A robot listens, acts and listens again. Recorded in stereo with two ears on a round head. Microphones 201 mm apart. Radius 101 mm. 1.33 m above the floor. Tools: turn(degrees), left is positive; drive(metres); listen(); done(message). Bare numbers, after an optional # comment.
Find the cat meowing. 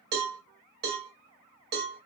listen()
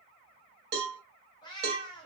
# The cat meowing: about 20° left or 160° left.
turn(20)
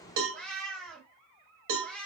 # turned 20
done("Facing the cat meowing, 1 to 2 m away.")